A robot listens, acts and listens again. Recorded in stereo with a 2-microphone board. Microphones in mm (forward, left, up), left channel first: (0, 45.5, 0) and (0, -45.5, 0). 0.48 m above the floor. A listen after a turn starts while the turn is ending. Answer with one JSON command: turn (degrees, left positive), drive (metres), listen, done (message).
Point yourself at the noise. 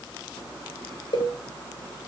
{"turn": 65}
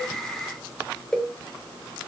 {"done": "Found it: a cowbell, straight ahead, 2 to 4 m away."}